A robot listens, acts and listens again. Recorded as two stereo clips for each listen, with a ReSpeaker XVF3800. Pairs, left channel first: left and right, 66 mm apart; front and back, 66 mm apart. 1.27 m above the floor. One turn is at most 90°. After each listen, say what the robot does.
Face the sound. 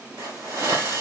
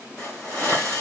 Turn 70° right.
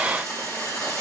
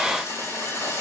Turn 20° left.
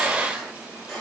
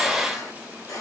Facing the hiss.